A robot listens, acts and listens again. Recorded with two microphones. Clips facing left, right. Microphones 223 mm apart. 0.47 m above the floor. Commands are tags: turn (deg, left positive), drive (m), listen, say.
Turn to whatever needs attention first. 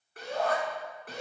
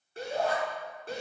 <turn deg="-30"/>
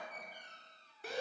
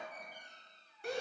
<say>Found it: a shout, straight ahead, over 4 m away.</say>